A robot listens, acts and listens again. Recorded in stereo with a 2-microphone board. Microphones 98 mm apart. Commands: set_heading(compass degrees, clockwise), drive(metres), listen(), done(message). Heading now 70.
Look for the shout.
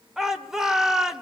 set_heading(100)
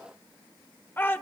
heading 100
set_heading(75)
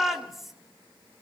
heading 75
done("Facing the shout, 2 to 4 m away.")